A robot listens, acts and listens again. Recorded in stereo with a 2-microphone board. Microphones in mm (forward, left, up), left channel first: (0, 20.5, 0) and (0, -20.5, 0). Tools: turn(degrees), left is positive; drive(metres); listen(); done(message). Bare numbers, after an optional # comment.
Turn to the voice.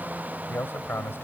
# The man speaking: about 70° left or 110° left.
turn(70)
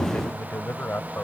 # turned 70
# So it is at 40° left.
turn(40)
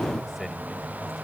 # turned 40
listen()
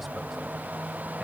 listen()
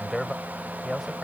done("Found it: a man speaking, straight ahead.")